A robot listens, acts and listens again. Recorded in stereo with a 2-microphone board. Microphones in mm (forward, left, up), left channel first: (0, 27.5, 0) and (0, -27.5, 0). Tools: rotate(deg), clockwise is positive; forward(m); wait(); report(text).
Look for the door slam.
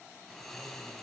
wait()
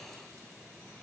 wait()
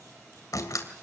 rotate(-90)
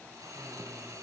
report("I heard a door slam from this way, but can't make it out now.")